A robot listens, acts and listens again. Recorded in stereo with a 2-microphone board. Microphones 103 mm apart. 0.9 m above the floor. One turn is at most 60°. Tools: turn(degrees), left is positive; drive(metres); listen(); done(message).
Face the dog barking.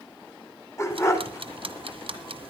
turn(degrees=25)
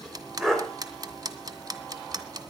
done("Found it: a dog barking, straight ahead, 2 to 4 m away.")